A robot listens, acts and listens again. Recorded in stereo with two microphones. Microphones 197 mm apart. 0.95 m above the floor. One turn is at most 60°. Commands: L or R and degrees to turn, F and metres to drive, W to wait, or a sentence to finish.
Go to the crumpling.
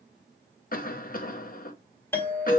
W
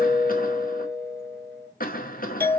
W
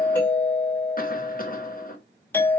I can't make out crumpling to turn to.